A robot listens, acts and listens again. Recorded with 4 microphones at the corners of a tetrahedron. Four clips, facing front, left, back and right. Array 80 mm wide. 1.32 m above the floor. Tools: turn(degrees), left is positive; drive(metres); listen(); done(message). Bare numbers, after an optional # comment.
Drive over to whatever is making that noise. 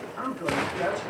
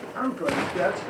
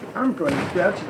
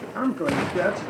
# The man speaking: 170° right.
turn(-170)
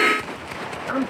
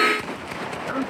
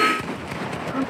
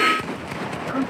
# The man speaking is now 10° left.
turn(10)
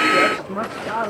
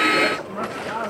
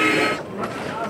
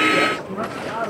drive(1.0)
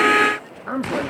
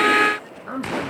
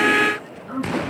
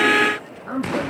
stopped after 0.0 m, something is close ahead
done("Something is in my way. I am facing the man speaking but have not reached it.")